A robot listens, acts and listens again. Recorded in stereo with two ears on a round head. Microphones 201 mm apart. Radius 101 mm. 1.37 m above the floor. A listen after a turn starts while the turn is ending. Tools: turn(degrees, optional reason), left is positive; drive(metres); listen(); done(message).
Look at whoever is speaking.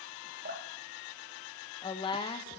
turn(degrees=20, reason="The woman speaking: about 20° left or 160° left.")
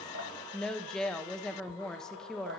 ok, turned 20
done("Found it: a woman speaking, straight ahead, under 1 m away.")